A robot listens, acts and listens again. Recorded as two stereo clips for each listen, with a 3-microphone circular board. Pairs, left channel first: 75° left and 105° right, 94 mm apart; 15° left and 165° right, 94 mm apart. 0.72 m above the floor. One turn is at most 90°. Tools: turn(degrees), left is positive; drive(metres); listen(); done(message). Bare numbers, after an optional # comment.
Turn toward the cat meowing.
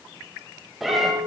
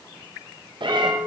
# The cat meowing: 165° left.
turn(90)
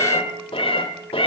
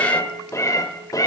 # The cat meowing is now 65° left.
turn(65)
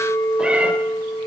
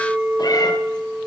listen()
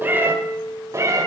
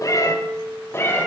# The cat meowing is now 50° right.
turn(-50)
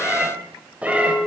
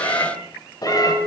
# The cat meowing is now 30° right.
turn(-30)
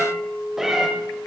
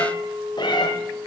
# The cat meowing is now 20° right.
turn(-20)
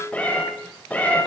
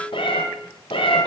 done("Found it: a cat meowing, straight ahead, 1 to 2 m away.")